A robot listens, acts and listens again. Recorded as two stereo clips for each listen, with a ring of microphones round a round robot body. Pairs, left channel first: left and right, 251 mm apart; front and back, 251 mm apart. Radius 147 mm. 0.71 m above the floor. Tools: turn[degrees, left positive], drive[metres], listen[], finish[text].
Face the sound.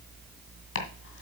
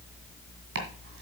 Thought: The chopping: 125° left.
Action: turn[125]
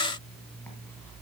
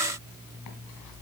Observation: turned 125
Action: listen[]
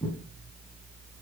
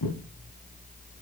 Action: finish[Facing the chopping, 2 to 4 m away.]